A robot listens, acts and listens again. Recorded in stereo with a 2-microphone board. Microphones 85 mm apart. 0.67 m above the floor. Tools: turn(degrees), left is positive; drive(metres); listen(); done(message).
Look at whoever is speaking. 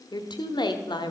turn(degrees=60)
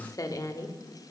turn(degrees=50)
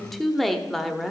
done("Found it: a woman speaking, straight ahead.")